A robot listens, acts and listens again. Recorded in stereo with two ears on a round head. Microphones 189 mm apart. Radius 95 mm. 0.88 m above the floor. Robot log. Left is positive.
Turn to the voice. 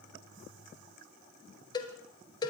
cmd idle
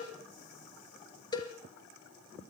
cmd idle
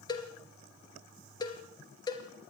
end: I can't make out anyone speaking to turn to.